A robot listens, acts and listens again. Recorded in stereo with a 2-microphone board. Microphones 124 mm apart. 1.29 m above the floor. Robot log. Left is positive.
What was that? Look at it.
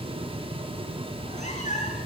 cmd yaw +90
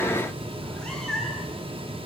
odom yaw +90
end: Found it: a cat meowing, straight ahead.